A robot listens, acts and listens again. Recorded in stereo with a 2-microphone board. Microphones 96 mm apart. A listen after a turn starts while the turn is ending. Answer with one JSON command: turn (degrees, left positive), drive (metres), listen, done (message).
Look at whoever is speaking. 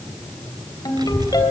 {"turn": -50}
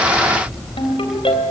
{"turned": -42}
{"done": "Facing the child speaking."}